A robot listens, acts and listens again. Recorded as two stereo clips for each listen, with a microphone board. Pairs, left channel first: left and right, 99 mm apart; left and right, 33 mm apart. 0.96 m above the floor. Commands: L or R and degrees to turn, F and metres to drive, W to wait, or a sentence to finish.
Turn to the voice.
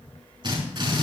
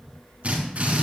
W
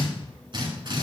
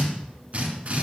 W
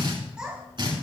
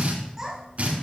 R30
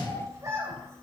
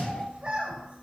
R145
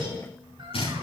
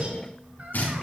W
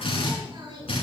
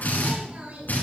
R55
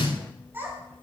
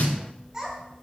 R20
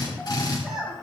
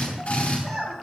Facing the child speaking, over 4 m away.